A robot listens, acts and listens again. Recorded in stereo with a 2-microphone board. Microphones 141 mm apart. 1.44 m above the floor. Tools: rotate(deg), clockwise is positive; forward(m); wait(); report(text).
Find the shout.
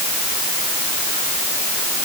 wait()
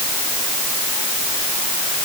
wait()
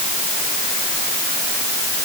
report("I can't make out a shout.")